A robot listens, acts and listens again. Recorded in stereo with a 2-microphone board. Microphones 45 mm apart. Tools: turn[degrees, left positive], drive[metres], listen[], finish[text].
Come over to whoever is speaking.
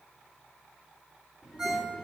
Action: turn[-30]
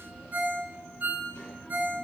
Thought: So it is at 20° left.
Action: turn[20]
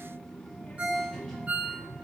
Thought: The child speaking is now 10° left.
Action: turn[10]
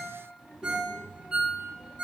Action: drive[1.0]
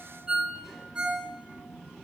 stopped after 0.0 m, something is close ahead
Thought: The child speaking is now 10° right.
Action: turn[-10]
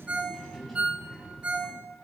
Action: finish[Blocked. The child speaking is further on, straight ahead.]